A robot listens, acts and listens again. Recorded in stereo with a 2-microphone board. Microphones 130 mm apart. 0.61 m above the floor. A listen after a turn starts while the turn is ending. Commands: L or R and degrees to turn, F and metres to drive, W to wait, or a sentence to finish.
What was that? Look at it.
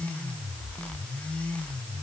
W
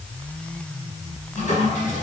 L75
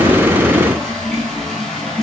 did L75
Facing the toilet flushing, over 4 m away.